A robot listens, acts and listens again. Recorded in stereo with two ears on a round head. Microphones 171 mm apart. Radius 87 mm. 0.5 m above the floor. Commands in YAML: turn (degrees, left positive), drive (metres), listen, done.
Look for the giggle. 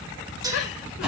turn: 60
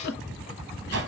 turn: 55
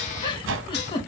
turn: 25
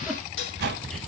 listen: true
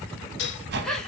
done: "Found it: a giggle, straight ahead."